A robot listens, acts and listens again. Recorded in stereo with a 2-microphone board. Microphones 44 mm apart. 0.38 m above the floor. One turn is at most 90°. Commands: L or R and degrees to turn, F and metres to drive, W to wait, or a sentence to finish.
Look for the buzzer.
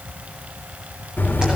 L50
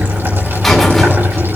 Found it: a buzzer, straight ahead, 2 to 4 m away.